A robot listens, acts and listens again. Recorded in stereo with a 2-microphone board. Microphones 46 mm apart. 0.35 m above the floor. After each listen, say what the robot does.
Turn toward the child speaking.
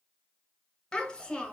Turn 20° left.
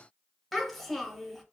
Facing the child speaking.